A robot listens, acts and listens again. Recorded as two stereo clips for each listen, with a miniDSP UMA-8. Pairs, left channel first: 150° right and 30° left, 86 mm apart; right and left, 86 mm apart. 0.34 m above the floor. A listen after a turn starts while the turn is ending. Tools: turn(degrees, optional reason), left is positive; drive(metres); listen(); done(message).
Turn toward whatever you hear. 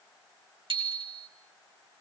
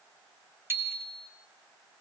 turn(degrees=25, reason="The bicycle bell: 25° left.")
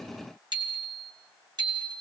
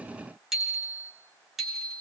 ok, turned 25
done("Found it: a bicycle bell, straight ahead, 2 to 4 m away.")